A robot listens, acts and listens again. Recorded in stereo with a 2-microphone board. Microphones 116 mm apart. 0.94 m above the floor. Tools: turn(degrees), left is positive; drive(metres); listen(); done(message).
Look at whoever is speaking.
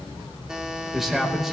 turn(degrees=30)
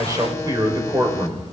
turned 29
turn(degrees=-30)
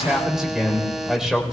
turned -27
done("Facing the man speaking, 2 to 4 m away.")